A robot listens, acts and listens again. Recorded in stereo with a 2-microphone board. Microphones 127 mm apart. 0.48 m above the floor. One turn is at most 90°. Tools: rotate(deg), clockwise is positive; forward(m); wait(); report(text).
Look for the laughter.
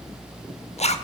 wait()
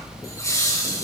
rotate(-25)
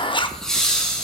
report("Facing the laughter.")